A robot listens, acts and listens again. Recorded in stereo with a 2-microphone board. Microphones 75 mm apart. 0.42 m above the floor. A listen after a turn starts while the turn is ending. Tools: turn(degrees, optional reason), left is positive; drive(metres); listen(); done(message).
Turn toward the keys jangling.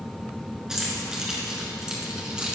turn(degrees=-30)
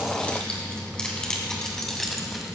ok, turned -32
done("Found it: keys jangling, straight ahead.")